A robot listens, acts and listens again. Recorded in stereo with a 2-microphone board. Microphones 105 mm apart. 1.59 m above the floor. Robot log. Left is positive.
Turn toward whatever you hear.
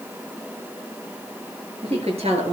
cmd yaw -90
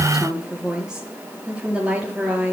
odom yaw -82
note: So it is at 15° right.
cmd yaw -15
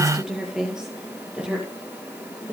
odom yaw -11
note: The woman speaking is now 10° right.
cmd yaw -10
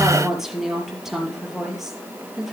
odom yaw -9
end: Found it: a woman speaking, straight ahead, over 4 m away.